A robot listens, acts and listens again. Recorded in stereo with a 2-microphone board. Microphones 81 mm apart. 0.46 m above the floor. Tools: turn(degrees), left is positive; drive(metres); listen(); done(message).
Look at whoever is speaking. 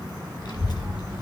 turn(degrees=70)
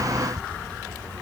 turn(degrees=20)
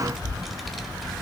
done("Facing the child speaking.")